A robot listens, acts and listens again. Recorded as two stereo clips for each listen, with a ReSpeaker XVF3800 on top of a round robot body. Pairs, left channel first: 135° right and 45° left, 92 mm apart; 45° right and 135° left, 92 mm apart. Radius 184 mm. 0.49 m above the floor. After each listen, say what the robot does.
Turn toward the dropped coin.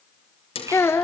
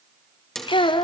Turn 130° right.
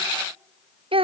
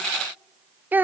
I heard a dropped coin from this way, but can't make it out now.